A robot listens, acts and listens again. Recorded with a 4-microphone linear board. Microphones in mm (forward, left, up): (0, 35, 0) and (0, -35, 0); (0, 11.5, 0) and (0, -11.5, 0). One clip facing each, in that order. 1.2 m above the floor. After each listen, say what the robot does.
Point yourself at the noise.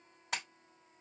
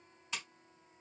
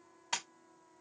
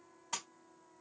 Turn 60° left.
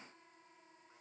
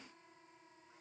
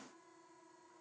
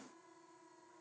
Keep listening.
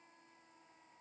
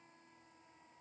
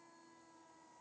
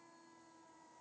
I heard a splash, but can't make it out now. It was about straight ahead or 60° left.